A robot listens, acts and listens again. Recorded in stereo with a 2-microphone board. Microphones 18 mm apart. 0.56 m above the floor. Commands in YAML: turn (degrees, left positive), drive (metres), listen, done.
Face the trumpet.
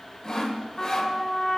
turn: 60
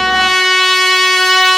done: "Found it: a trumpet, straight ahead."